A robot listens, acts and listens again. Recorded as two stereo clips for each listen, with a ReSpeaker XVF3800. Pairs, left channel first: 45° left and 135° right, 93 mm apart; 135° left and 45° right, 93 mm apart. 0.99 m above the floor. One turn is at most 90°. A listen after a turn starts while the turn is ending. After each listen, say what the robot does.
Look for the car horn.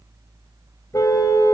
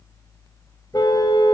Turn 90° left.
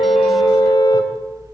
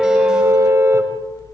Turn 15° left.
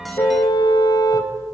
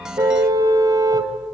Facing the car horn.